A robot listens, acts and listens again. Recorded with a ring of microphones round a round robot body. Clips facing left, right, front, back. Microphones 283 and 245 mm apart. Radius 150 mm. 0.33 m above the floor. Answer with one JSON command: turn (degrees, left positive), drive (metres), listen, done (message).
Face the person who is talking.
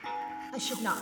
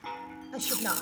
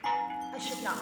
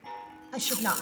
{"turn": 170}
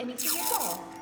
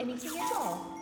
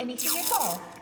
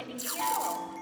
{"done": "Found it: a woman speaking, straight ahead, 2 to 4 m away."}